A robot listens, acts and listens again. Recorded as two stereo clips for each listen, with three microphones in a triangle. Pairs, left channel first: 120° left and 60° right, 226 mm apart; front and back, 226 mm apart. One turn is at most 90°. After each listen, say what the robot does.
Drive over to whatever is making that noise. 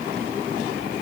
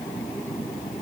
Keep listening.
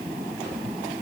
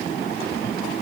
Keep listening.
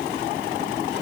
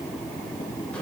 I can't make out anything.